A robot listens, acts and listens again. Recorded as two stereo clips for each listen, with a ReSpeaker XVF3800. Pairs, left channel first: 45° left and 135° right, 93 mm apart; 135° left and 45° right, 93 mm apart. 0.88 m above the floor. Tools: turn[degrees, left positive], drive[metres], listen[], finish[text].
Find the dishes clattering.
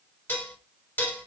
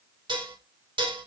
Thought: The dishes clattering: 20° right.
Action: turn[-20]
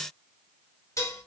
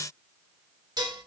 Action: finish[Found it: dishes clattering, straight ahead, 2 to 4 m away.]